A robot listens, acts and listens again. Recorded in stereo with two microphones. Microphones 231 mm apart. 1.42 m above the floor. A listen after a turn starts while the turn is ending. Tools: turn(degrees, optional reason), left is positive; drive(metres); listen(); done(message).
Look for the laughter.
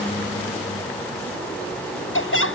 turn(degrees=60, reason="The laughter: about 60° left or 120° left.")
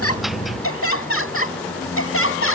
turn(degrees=60, reason="So it is at 60° left.")
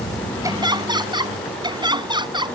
turn(degrees=-20, reason="The laughter is now 20° right.")
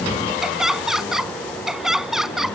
done("Facing the laughter.")